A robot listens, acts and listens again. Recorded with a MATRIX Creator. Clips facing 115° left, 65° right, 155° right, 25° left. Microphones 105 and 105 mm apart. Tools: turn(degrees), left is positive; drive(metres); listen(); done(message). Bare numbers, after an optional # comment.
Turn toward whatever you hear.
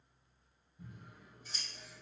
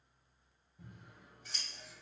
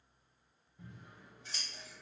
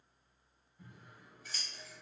# The scissors: 95° right.
turn(-95)
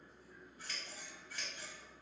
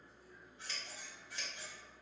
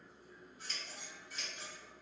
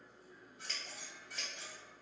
done("Found it: scissors, straight ahead.")